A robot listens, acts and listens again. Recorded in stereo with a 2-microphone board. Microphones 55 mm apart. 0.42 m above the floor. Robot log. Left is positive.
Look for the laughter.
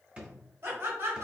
note: The laughter: about 55° right or 125° right.
cmd yaw -55
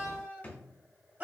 note: So it is at 30° right.
cmd yaw -30
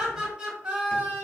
note: The laughter is now 20° right.
cmd yaw -20
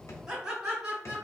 note: The laughter is now 15° right.
cmd yaw -15
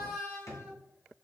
end: Found it: laughter, straight ahead.